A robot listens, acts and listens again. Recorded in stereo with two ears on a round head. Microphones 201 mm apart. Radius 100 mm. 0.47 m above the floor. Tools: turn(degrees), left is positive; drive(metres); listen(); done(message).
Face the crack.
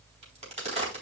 turn(degrees=-30)
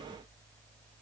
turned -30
listen()
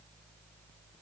done("I heard a crack, but can't make it out now. It was about straight ahead or 120° right.")